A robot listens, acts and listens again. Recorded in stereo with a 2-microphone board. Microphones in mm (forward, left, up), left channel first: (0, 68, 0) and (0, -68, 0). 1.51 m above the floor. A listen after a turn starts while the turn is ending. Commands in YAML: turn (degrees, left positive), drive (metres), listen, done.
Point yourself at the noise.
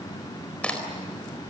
turn: 30
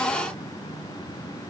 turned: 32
listen: true
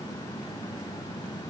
done: "I heard a crack, but can't make it out now. It was about 25° right or 140° left."